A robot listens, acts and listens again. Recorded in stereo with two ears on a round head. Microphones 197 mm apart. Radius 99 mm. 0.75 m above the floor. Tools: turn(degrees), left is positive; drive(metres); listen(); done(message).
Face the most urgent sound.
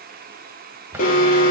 turn(degrees=40)
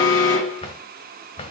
turn(degrees=90)
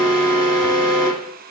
turn(degrees=20)
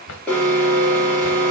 done("Facing the alarm.")